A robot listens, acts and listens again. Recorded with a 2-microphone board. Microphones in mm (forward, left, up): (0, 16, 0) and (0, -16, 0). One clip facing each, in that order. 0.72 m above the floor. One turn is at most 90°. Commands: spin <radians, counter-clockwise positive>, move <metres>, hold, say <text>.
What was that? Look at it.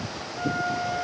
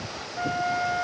spin -0.61
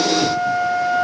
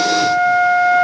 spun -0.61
spin -1.57
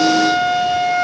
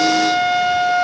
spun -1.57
spin -0.17
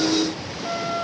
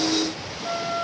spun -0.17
say Found it: a flute, straight ahead, 2 to 4 m away.